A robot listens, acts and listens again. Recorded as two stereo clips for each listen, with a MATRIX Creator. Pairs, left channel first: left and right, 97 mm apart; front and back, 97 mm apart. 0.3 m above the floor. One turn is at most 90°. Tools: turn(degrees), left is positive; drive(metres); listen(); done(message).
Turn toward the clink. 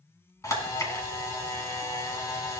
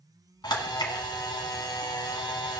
listen()
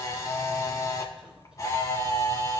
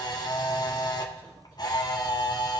listen()
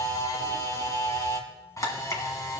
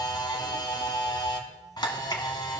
done("I can't make out a clink to turn to.")